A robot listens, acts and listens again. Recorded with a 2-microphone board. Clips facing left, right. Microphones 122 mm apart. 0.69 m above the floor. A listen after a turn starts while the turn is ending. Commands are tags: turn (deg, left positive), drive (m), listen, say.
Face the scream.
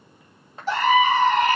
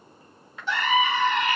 <turn deg="40"/>
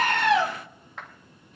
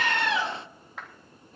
<listen/>
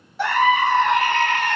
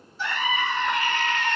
<turn deg="100"/>
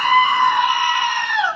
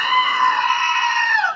<turn deg="15"/>
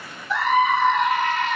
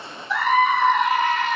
<say>Found it: a scream, straight ahead, 2 to 4 m away.</say>